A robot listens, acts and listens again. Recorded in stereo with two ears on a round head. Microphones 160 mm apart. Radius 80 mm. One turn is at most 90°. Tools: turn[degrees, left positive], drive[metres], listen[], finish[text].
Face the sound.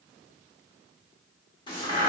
Thought: The crack: about 25° left or 155° left.
Action: turn[25]
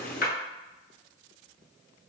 Thought: So it is at 130° left.
Action: turn[90]
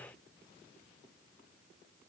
Thought: Nothing new. It was at 40° left.
Action: turn[40]
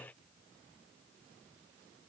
Action: finish[Facing where the crack came from. I can't hear it now.]